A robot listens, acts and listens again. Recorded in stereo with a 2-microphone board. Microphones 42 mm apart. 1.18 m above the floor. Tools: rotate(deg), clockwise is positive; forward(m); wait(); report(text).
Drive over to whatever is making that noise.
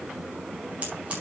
rotate(30)
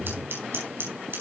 rotate(115)
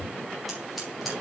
forward(1.0)
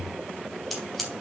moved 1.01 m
forward(1.0)
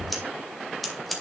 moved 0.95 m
forward(1.0)
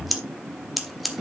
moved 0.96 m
forward(1.0)
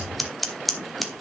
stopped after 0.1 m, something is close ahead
report("Arrived at the scissors, straight ahead.")